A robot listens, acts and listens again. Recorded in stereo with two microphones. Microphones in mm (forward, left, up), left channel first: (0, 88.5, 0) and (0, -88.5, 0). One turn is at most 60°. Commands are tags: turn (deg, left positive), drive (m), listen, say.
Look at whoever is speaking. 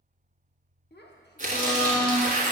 <turn deg="60"/>
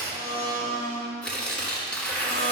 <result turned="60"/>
<listen/>
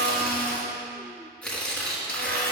<listen/>
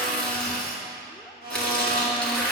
<say>I heard a child speaking, but can't make it out now. It was about 15° left or 45° left.</say>